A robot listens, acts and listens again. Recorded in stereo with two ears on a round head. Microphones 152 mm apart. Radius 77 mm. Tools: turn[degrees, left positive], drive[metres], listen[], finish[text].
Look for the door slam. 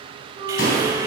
Thought: The door slam: about 70° left or 110° left.
Action: turn[70]
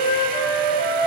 Action: listen[]
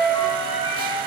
Action: finish[I heard a door slam, but can't make it out now. It was about straight ahead or 40° left.]